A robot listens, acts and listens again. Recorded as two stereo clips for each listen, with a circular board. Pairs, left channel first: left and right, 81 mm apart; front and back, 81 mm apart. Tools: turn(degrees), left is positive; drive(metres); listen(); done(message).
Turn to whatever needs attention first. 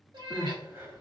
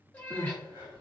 turn(degrees=-145)
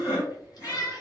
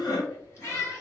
turn(degrees=-20)
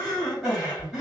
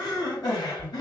done("Facing the crying.")